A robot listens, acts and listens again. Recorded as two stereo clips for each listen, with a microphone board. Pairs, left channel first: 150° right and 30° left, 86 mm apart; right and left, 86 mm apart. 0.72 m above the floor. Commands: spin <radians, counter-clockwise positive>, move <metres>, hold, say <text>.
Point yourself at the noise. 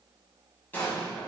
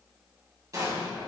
spin 2.44
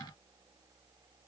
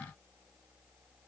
say Facing where the explosion came from. I can't hear it now.